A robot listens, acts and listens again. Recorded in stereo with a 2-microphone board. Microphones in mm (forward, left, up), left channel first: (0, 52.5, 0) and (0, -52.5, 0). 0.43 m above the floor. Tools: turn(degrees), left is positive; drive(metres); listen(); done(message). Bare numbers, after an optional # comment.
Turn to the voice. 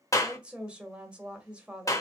turn(-30)
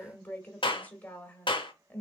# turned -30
# So it is at 20° left.
turn(20)
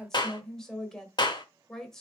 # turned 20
done("Found it: a woman speaking, straight ahead.")